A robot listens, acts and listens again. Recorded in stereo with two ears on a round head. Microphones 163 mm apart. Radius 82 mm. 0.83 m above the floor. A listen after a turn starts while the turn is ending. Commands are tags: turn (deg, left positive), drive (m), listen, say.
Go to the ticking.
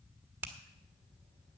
<listen/>
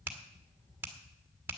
<listen/>
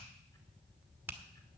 <say>I can't make out ticking, only a finger snap.</say>